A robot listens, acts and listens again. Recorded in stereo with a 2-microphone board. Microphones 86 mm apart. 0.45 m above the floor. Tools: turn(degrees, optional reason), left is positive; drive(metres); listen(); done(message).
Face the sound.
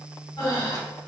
turn(degrees=65, reason="The breathing: about 65° left or 115° left.")
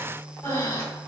turn(degrees=35, reason="So it is at 35° left.")
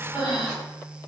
turn(degrees=-10, reason="The breathing is now 10° right.")
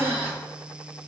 done("Facing the breathing, 1 to 2 m away.")